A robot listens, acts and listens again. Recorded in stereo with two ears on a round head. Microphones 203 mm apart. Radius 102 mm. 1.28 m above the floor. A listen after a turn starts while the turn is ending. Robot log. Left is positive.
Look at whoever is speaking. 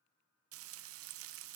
cmd idle
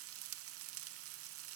cmd idle
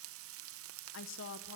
note: The woman speaking: about 60° left or 120° left.
cmd yaw +60
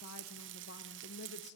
note: So it is at 50° left.
cmd yaw +50
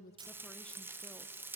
cmd idle
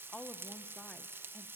end: Found it: a woman speaking, straight ahead, 1 to 2 m away.